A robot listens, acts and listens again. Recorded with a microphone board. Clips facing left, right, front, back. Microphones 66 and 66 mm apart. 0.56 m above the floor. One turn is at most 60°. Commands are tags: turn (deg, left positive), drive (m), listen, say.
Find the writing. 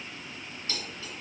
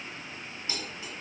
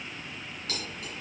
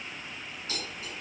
<listen/>
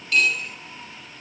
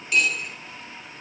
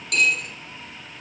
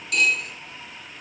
<listen/>
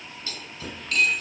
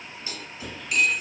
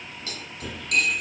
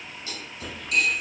<turn deg="60"/>
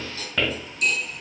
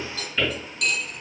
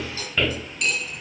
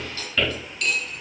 <turn deg="60"/>
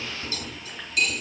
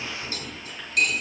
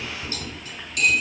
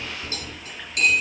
<turn deg="15"/>
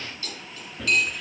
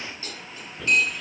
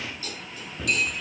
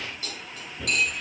<say>Found it: writing, straight ahead.</say>